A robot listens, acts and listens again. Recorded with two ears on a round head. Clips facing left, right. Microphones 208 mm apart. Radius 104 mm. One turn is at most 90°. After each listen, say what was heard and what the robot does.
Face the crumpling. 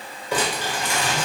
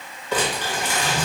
Turn 30° left.
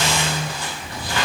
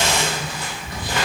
So it is at 20° right. Turn 20° right.
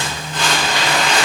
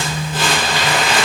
Facing the crumpling, 1 to 2 m away.